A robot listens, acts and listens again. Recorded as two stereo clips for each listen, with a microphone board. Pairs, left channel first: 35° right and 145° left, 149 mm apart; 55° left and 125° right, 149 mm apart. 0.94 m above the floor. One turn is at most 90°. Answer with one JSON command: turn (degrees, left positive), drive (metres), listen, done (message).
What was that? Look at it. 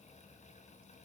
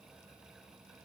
{"listen": true}
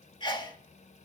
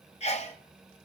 {"turn": 20}
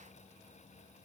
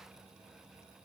{"done": "Facing where the sneeze came from. I can't hear it now."}